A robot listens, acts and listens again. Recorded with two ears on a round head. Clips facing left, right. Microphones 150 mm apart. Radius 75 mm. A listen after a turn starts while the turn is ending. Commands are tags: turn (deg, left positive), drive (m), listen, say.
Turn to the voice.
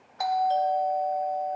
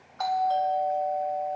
<listen/>
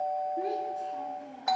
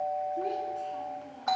<turn deg="30"/>
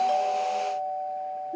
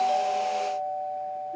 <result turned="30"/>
<turn deg="140"/>
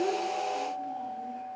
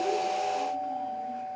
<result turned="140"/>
<listen/>
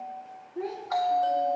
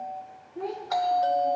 <turn deg="10"/>
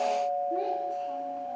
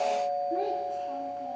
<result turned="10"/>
<say>Found it: a child speaking, straight ahead.</say>